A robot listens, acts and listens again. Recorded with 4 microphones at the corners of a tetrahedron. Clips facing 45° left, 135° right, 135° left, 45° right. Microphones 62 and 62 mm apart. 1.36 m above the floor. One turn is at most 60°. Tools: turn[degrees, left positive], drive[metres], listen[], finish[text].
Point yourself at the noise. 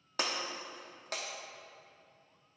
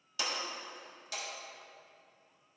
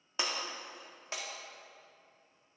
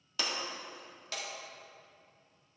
Thought: The breaking glass: 75° left.
Action: turn[60]
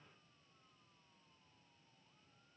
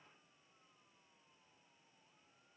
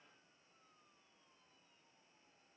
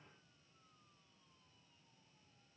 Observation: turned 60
Thought: Nothing new. It was at 15° left.
Action: turn[15]
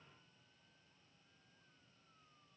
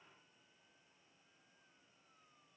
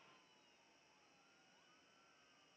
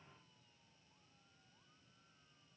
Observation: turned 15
Action: finish[Facing where the breaking glass came from. I can't hear it now.]